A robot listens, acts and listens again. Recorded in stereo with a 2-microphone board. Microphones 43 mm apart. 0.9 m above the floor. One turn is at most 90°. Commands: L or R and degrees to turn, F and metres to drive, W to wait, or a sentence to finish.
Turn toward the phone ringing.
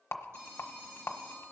R90
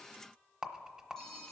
L15
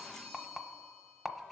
Found it: a phone ringing, straight ahead, 2 to 4 m away.